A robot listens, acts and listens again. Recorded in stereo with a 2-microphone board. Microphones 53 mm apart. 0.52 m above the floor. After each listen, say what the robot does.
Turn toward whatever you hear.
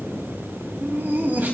Turn 40° right.
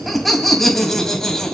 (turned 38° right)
Turn 15° left.
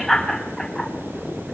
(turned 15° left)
Found it: laughter, straight ahead.